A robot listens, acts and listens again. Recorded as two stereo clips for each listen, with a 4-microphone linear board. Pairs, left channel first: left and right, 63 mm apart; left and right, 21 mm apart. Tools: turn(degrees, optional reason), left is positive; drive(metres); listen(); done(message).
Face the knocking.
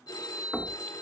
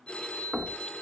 turn(degrees=30)
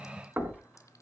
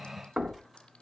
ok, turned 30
turn(degrees=-30, reason="So it is at 30° right.")
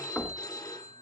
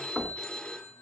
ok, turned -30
turn(degrees=10, reason="The knocking is now 10° left.")
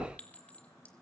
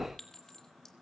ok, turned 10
done("Facing the knocking, 2 to 4 m away.")